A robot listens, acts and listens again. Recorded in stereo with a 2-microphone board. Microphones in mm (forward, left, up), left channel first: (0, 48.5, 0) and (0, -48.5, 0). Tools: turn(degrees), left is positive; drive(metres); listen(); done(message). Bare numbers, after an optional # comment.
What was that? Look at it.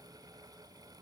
listen()
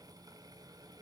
listen()
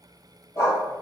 # The dog barking: about 30° left or 150° left.
turn(30)
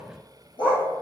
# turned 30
# So it is at 115° left.
turn(115)
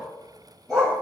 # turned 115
done("Facing the dog barking.")